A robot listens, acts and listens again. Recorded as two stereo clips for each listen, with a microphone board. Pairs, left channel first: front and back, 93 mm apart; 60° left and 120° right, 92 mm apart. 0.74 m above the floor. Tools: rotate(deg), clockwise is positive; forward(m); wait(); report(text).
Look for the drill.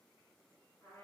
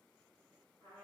wait()
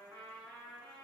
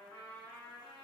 wait()
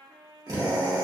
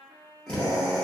rotate(-140)
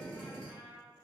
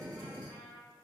rotate(15)
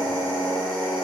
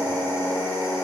report("Found it: a drill, straight ahead, 1 to 2 m away.")